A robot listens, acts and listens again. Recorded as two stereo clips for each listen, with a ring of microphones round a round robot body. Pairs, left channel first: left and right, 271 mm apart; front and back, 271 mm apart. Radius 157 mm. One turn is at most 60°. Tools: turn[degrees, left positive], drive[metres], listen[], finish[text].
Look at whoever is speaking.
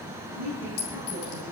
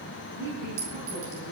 Thought: The woman speaking: straight behind.
Action: turn[60]
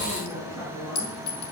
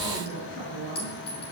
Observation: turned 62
Thought: The woman speaking is now 115° left.
Action: turn[60]
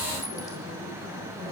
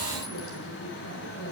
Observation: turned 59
Thought: Nothing new. It was at 60° left.
Action: turn[60]
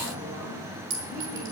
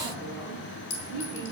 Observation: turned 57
Action: listen[]
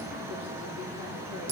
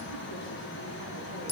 Action: finish[Facing where the woman speaking came from. I can't hear it now.]